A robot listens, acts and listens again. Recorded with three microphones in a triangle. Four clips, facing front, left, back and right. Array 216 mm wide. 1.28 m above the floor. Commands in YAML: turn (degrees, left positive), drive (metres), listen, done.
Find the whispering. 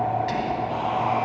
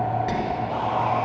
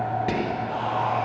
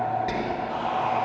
turn: -175
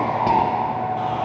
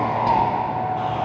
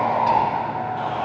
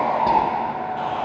listen: true
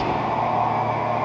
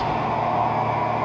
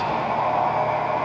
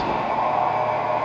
turn: -40
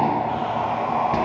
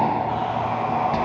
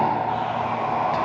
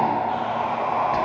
listen: true
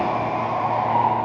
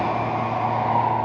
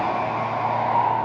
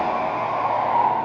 listen: true
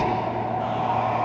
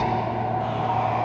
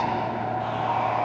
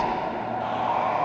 done: "Facing where the whispering came from. I can't hear it now."